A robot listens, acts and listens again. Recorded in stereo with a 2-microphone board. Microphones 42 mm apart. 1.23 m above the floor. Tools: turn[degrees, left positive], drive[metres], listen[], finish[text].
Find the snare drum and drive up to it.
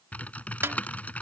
Thought: The snare drum: about 75° right or 105° right.
Action: turn[-75]
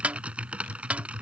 Thought: So it is at 35° right.
Action: turn[-35]
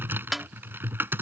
Action: drive[1.0]
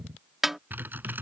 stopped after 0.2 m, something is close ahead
Thought: The snare drum is now 10° right.
Action: turn[-10]
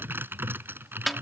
Action: finish[Blocked. The snare drum is further on, straight ahead.]